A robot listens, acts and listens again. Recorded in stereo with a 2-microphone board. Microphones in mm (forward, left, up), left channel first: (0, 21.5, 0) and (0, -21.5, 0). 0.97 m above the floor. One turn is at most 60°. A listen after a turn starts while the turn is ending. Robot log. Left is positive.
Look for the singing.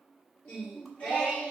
note: The singing: about 30° left or 150° left.
cmd yaw +30
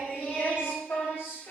note: So it is at 120° left.
cmd yaw +60
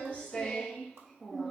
end: Facing the singing, 1 to 2 m away.